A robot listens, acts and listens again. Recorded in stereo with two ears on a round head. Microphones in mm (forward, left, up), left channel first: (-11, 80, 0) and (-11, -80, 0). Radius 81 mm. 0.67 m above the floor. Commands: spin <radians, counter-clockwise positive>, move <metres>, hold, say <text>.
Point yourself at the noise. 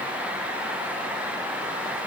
hold
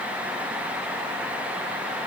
hold
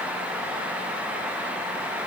say I can't make out anything.